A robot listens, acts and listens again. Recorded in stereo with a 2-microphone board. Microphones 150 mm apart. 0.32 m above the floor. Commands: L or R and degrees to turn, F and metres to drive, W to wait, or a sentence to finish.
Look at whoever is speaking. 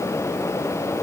W
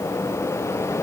W
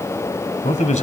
L55
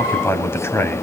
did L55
L20
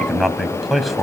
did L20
Facing the man speaking, 1 to 2 m away.